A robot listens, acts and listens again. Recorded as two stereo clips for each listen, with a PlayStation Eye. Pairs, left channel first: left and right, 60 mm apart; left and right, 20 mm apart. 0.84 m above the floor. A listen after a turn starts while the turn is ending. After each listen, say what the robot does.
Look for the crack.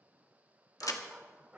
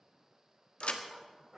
Turn 70° left.
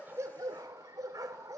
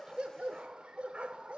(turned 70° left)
Keep listening.
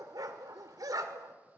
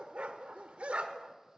I heard a crack, but can't make it out now. It was about straight ahead or 40° left.